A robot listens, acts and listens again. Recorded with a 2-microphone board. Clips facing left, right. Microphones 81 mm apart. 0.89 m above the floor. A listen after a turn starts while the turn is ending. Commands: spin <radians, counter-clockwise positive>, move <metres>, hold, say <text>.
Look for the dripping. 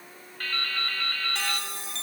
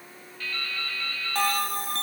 spin 0.96
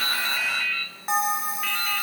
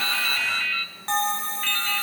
say Found it: dripping, straight ahead, over 4 m away.